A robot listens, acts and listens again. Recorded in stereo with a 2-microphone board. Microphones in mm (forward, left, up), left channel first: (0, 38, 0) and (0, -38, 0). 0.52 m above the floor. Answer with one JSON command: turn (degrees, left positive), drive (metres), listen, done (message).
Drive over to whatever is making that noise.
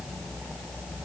{"listen": true}
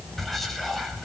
{"turn": 30}
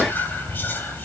{"turn": 150}
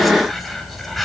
{"drive": 1.0}
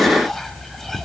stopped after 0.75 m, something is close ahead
{"done": "I am next to the whispering."}